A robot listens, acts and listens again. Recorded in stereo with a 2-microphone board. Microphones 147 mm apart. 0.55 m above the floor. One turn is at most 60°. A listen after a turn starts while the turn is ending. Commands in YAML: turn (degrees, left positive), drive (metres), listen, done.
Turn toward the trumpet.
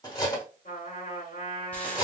turn: 60
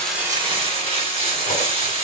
listen: true
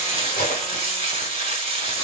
listen: true
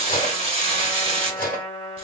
turn: 30
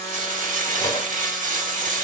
listen: true
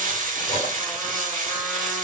listen: true
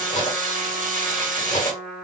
turn: -10
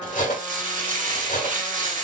listen: true
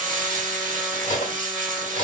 listen: true
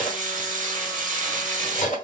done: "Facing where the trumpet came from. I can't hear it now."